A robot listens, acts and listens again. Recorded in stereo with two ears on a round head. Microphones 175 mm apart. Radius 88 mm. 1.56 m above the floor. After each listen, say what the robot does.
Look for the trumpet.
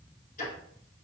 Keep listening.
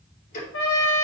Turn 70° left.
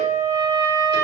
Turn 15° left.
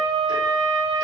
Found it: a trumpet, straight ahead.